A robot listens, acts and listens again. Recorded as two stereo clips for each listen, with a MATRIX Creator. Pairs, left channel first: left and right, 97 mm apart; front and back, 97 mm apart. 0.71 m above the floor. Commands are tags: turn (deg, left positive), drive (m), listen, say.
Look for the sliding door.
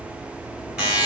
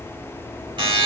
<listen/>
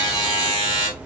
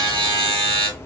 <listen/>
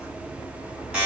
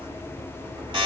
<say>I can't make out a sliding door, only a buzzer.</say>